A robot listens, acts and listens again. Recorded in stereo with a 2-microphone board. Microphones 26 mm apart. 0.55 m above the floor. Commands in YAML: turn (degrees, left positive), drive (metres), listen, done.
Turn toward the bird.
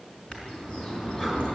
turn: 35
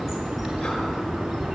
done: "Found it: a bird, straight ahead."